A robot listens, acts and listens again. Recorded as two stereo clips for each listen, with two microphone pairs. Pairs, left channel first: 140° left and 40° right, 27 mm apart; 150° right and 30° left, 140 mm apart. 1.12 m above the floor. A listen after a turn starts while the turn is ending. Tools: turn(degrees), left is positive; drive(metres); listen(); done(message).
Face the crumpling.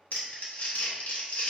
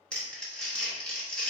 turn(degrees=125)
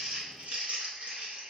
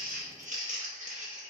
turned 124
done("Found it: crumpling, straight ahead.")